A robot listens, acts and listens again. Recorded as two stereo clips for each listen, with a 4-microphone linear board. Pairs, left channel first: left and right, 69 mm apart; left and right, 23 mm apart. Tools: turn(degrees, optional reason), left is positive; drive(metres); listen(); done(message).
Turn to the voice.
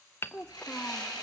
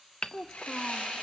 turn(degrees=20, reason="The child speaking: about 20° left or 160° left.")
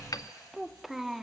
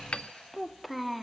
done("Found it: a child speaking, straight ahead, under 1 m away.")